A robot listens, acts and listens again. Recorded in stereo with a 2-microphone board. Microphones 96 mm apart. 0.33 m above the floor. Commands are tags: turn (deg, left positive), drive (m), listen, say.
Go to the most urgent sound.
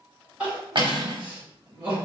<turn deg="-30"/>
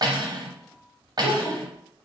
<turn deg="20"/>
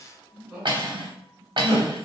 <drive m="1.0"/>
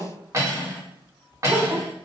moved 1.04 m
<drive m="1.0"/>
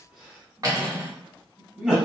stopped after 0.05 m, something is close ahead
<say>I am next to the crying.</say>